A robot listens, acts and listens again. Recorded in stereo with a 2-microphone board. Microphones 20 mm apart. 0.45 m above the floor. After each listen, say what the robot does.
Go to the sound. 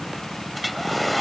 Turn 30° left.
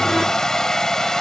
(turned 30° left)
Turn 145° left.
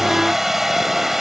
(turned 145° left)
Turn 20° right.
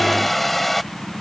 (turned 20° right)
Drive 1.0 m forward.
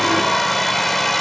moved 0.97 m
Drive 1.0 m forward.
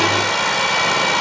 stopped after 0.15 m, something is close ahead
I am next to the hair dryer.